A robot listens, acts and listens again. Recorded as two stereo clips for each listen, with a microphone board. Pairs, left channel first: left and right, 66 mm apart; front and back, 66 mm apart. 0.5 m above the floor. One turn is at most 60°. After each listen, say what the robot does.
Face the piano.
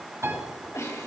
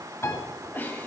Turn 45° right.
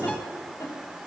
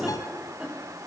Keep listening.
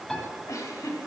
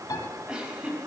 Found it: a piano, straight ahead, over 4 m away.